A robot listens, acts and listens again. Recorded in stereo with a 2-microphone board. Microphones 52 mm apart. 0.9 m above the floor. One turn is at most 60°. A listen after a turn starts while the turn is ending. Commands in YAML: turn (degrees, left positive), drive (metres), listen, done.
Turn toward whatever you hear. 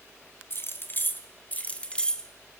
turn: 15
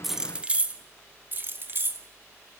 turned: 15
turn: -50
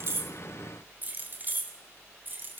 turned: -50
turn: -40
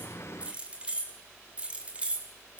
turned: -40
turn: -20
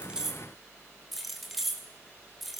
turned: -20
done: "Facing the keys jangling."